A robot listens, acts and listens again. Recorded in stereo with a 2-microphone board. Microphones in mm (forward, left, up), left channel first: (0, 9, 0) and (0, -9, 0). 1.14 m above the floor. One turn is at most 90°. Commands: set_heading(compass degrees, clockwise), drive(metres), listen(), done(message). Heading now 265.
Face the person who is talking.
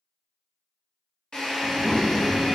set_heading(305)
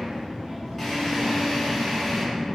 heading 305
set_heading(35)
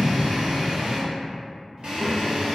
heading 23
set_heading(48)
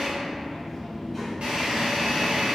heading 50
done("Facing the child speaking, under 1 m away.")